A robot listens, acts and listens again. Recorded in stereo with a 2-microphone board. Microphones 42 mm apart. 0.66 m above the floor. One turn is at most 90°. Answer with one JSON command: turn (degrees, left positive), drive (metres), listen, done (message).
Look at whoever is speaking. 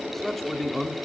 {"turn": 30}
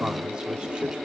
{"listen": true}
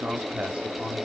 {"turn": -25}
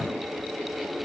{"listen": true}
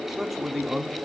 {"done": "Found it: a man speaking, straight ahead, 1 to 2 m away."}